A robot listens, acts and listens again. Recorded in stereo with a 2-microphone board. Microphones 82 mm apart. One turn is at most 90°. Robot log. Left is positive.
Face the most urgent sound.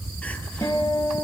cmd idle
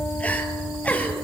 note: The crying: about 20° left or 160° left.
cmd yaw +20
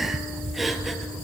end: Found it: crying, straight ahead.